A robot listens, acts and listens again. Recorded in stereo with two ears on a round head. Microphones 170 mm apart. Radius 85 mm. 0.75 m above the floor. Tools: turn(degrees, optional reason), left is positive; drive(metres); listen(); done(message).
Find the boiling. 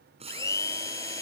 turn(degrees=-35, reason="The boiling: about 35° right or 145° right.")
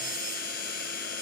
listen()
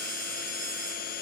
listen()
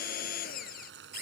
turn(degrees=-115, reason="So it is at 115° right.")
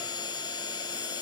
listen()
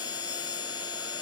listen()
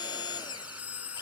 done("I heard boiling from this way, but can't make it out now.")